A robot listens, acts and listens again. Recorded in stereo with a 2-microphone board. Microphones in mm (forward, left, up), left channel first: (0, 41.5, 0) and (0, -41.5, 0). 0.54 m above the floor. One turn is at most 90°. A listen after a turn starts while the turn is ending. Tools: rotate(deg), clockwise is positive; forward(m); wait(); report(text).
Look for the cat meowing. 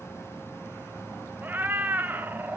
rotate(20)
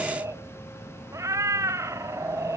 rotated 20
rotate(90)
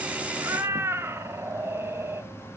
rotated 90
rotate(35)
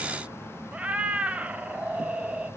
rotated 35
rotate(15)
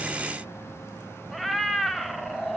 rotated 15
report("Found it: a cat meowing, straight ahead.")